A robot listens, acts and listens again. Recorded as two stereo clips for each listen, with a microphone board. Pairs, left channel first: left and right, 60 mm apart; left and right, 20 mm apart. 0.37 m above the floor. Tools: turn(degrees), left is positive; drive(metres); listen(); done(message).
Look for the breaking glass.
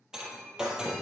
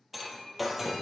turn(degrees=-30)
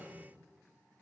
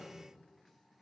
listen()
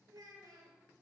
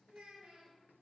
done("I heard breaking glass, but can't make it out now. It was about 20° left or 140° right.")